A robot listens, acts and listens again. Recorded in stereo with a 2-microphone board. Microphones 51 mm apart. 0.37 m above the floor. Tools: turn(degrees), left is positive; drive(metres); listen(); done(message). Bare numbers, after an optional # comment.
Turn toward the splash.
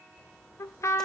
turn(30)
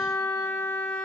listen()
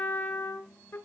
done("I heard a splash, but can't make it out now. It was about 25° right or 145° left.")